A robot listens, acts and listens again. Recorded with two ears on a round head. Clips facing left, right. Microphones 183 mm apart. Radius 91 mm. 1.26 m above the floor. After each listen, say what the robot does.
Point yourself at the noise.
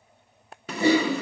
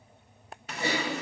Turn 70° left.
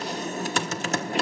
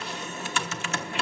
Turn 35° left.
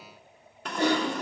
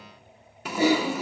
Facing the typing on a keyboard.